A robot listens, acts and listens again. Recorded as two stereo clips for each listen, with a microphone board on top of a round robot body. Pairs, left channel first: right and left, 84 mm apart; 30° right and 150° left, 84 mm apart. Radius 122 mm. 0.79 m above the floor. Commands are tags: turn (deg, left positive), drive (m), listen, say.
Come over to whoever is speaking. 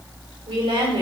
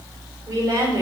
<turn deg="100"/>
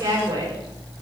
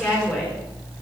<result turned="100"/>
<turn deg="40"/>
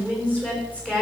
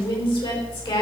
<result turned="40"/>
<turn deg="-15"/>
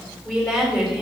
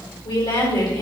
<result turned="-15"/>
<drive m="1.0"/>
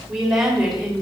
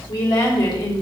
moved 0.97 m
<drive m="1.0"/>
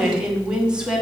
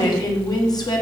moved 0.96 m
<turn deg="10"/>
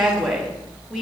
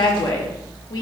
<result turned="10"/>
<drive m="1.0"/>
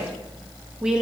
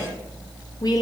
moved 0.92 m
<turn deg="10"/>
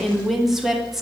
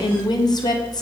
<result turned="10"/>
<drive m="1.0"/>
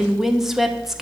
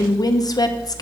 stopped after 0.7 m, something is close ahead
<say>I am next to the woman speaking.</say>